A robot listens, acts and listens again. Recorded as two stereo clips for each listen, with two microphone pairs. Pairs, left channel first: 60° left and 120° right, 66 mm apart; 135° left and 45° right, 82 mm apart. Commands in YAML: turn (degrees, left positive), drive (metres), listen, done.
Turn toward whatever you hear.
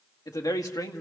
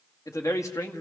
turn: 80
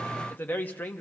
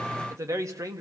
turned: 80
done: "Facing the man speaking."